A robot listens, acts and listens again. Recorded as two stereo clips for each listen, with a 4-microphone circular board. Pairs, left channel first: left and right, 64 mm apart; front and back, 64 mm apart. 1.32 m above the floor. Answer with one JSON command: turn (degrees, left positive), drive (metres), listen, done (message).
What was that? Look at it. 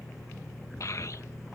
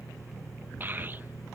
{"turn": 125}
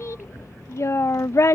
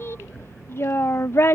{"turn": 50}
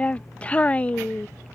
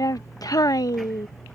{"turn": 25}
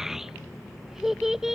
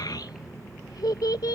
{"done": "Found it: a child speaking, straight ahead."}